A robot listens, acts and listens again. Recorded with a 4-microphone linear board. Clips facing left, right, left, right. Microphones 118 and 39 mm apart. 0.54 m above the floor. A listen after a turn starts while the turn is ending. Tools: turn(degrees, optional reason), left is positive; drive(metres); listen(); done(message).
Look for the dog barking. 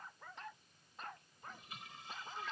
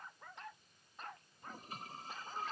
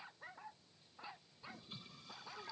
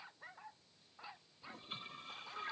listen()
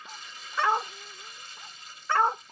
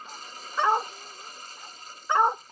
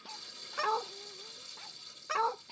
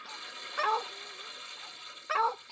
turn(degrees=-15, reason="The dog barking: about 15° right or 165° right.")
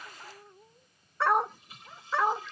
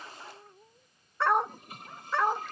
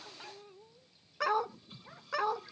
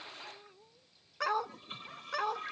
done("Facing the dog barking.")